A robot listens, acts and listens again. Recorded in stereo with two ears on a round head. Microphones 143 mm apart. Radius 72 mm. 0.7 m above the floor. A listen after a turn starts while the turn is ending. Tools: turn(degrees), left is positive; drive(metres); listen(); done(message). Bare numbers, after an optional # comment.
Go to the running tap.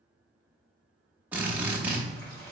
# The running tap: about 20° left or 160° left.
turn(20)
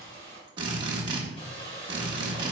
# So it is at 140° left.
turn(140)
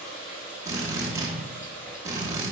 # The running tap is now 15° left.
turn(15)
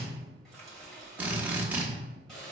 drive(1.0)
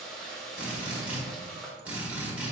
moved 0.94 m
drive(1.0)
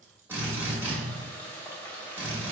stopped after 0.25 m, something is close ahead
# The running tap is now 10° left.
turn(10)
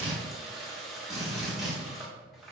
done("I am next to the running tap.")